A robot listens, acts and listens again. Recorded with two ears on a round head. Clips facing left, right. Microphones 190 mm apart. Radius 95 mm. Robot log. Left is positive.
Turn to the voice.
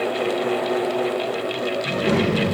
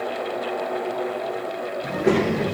note: The child speaking: about 55° right or 125° right.
cmd yaw -55
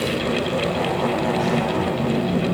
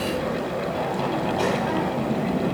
note: So it is at 70° right.
cmd yaw -70
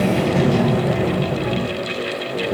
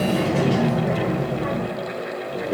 end: Facing the child speaking, 1 to 2 m away.